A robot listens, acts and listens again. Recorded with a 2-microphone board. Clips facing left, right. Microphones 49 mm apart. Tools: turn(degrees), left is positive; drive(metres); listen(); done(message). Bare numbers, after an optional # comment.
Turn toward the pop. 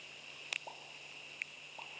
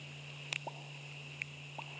# The pop: about 15° right or 165° right.
turn(-15)
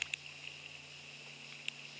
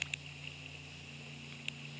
listen()
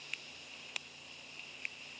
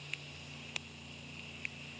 done("I heard a pop, but can't make it out now. It was about straight ahead or 150° right.")